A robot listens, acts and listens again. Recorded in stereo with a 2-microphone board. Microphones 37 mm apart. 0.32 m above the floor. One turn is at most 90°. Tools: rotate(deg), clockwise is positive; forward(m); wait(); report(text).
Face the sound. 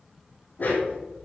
rotate(-50)
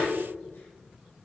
rotate(-80)
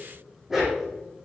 report("Found it: a dog barking, straight ahead.")